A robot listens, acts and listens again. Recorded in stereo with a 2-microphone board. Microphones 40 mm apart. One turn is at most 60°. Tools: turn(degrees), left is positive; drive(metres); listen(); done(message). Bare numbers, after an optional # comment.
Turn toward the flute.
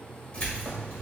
listen()
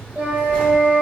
# The flute: about 60° right or 120° right.
turn(-60)
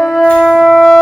# So it is at 20° right.
turn(-20)
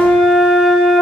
done("Facing the flute, 1 to 2 m away.")